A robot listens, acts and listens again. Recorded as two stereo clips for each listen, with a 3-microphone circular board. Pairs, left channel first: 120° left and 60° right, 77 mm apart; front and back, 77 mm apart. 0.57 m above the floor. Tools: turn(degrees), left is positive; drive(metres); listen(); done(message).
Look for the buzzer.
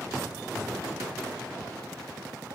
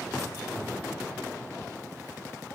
listen()
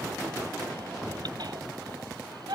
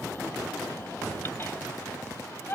listen()
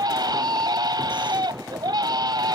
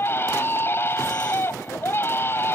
done("I can't make out a buzzer, only a baby crying.")